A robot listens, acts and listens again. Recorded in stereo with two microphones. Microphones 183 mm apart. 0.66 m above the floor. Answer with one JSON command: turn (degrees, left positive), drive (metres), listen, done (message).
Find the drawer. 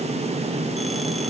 {"listen": true}
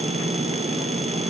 {"listen": true}
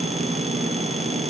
{"done": "I can't make out a drawer to turn to."}